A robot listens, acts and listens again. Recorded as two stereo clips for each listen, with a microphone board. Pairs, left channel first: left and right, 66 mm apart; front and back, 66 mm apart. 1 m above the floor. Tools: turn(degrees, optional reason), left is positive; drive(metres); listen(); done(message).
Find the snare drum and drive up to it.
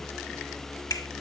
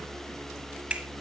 listen()
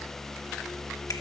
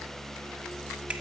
listen()
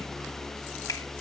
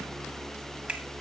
done("I can't make out a snare drum to turn to.")